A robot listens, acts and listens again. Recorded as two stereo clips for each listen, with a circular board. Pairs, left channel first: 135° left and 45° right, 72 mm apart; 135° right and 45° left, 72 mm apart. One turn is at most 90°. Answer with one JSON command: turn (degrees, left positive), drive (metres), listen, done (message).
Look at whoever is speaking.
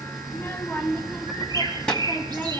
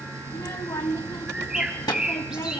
{"turn": -90}
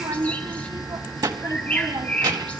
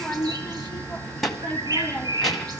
{"turn": -50}
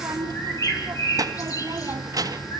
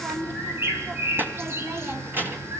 {"turn": -15}
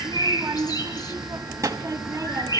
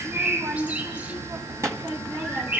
{"done": "Facing the child speaking."}